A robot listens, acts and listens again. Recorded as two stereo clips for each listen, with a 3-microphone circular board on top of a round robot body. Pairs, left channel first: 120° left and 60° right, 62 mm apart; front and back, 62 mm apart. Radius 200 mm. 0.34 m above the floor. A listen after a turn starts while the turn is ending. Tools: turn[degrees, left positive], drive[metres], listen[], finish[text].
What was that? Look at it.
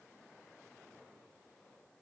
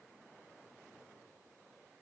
Action: listen[]
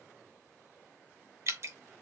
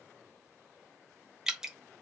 Thought: The dripping: 100° right.
Action: turn[-100]
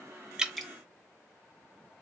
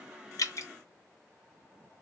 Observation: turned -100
Thought: The dripping is now 30° left.
Action: turn[30]
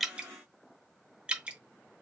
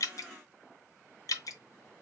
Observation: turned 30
Thought: The dripping is now 10° left.
Action: turn[10]
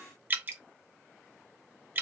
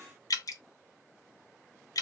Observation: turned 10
Action: finish[Facing the dripping, under 1 m away.]